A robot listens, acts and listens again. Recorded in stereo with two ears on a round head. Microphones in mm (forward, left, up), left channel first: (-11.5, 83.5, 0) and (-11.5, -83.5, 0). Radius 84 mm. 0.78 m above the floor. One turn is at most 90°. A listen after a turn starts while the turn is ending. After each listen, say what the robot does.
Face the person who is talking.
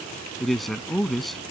Turn 30° left.
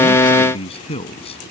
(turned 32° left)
Turn 90° left.
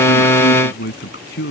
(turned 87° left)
Turn 60° left.
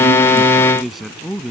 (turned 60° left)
Found it: a man speaking, straight ahead.